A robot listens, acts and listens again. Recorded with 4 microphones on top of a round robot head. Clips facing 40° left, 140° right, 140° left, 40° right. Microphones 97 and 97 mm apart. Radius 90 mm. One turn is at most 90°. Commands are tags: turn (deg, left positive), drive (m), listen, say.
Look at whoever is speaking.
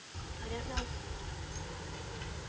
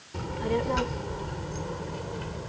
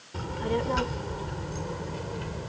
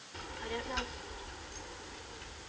<turn deg="90"/>
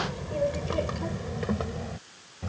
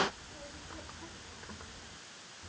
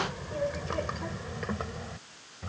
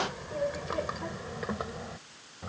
<turn deg="35"/>
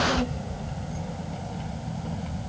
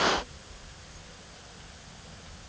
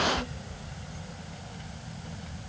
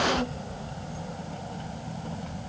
<turn deg="10"/>
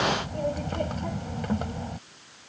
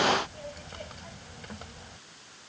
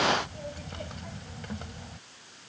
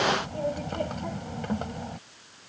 <say>Facing the child speaking.</say>